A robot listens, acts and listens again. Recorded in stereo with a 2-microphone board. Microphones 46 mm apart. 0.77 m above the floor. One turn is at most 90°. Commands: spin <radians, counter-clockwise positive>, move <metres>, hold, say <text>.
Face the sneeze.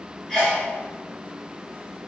spin 0.52
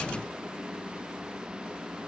hold
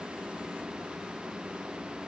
say I heard a sneeze, but can't make it out now. It was about 20° right or 140° left.